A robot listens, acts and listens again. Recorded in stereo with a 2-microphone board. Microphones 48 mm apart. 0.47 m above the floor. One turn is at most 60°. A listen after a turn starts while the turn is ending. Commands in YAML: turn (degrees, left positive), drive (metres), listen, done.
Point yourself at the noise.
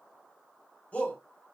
turn: 30
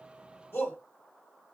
turn: 60
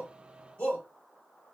turn: 50
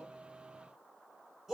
done: "Facing the shout."